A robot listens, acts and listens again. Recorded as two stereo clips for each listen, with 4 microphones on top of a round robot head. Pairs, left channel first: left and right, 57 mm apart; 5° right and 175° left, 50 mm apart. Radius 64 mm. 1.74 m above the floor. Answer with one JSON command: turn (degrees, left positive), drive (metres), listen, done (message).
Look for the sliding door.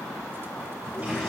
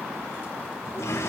{"turn": 15}
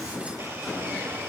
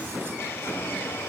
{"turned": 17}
{"listen": true}
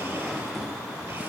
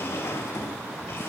{"done": "Facing the sliding door."}